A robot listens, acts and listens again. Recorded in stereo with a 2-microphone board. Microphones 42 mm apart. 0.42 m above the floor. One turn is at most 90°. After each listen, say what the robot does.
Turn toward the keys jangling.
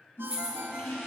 Turn 20° right.
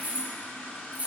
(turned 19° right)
Turn 35° right.
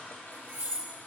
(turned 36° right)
Turn 90° right.
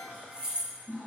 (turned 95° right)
Turn 15° right.
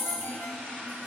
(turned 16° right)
Found it: keys jangling, straight ahead.